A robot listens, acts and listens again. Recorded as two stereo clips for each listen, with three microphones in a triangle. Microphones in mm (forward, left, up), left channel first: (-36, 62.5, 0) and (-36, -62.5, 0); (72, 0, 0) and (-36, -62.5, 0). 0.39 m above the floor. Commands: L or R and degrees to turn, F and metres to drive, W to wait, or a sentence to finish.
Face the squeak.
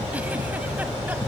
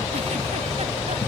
W
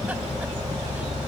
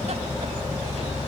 W
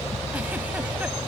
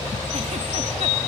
I can't make out a squeak.